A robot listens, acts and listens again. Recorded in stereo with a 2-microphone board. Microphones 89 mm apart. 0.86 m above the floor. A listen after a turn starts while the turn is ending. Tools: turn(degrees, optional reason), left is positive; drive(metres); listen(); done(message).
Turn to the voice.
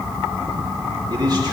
turn(degrees=-55, reason="The man speaking: about 55° right or 125° right.")
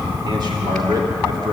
turn(degrees=-60, reason="So it is at 60° right.")
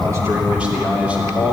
turn(degrees=-15, reason="The man speaking is now 15° right.")
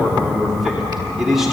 done("Found it: a man speaking, straight ahead.")